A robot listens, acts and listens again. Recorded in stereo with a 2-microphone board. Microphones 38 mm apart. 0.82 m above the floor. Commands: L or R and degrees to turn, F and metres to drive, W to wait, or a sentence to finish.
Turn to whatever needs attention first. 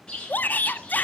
L50
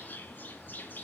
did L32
W
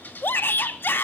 L90
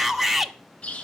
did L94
Found it: a shout, straight ahead.